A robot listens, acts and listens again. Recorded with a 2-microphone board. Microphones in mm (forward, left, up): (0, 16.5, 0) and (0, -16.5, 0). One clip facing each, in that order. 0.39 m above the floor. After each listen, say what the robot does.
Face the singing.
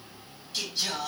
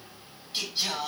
Turn 20° right.
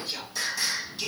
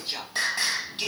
Turn 140° right.
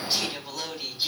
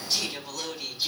Turn 20° left.
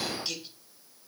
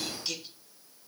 Found it: singing, straight ahead.